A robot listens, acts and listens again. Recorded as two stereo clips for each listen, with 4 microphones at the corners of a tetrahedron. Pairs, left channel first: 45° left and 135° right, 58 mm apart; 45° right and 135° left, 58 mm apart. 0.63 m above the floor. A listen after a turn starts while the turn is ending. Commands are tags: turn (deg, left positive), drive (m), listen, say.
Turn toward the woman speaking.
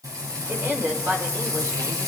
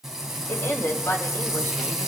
<turn deg="-95"/>
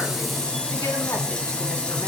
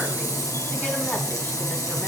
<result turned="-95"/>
<listen/>
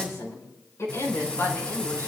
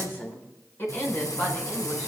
<say>Facing the woman speaking.</say>